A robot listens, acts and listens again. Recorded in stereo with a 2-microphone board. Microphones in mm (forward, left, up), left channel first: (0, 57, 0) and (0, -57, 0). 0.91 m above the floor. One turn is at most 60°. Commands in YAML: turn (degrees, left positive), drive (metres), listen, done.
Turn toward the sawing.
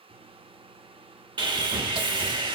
turn: -40
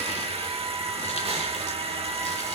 turn: -60
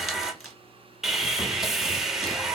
done: "Found it: sawing, straight ahead, under 1 m away."